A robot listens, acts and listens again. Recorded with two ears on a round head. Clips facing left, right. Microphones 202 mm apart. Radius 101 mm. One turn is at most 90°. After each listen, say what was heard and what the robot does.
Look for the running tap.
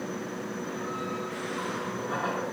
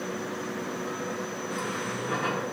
The running tap: about 40° right or 140° right. Turn 40° right.
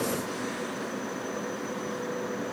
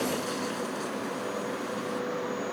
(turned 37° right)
Keep listening.
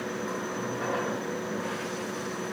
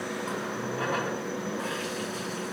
So it is at 105° right. Turn 90° right.
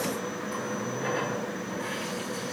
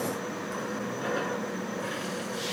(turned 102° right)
Facing the running tap, over 4 m away.